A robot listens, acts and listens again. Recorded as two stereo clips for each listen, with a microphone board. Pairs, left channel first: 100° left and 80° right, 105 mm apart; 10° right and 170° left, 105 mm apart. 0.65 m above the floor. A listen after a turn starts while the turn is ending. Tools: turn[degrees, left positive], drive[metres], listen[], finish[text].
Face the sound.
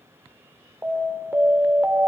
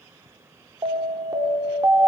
Thought: The alarm: 150° right.
Action: turn[-150]
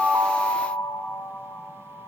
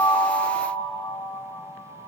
Thought: The alarm is now 30° left.
Action: turn[30]
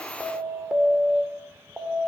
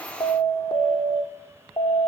Action: finish[Facing the alarm, 2 to 4 m away.]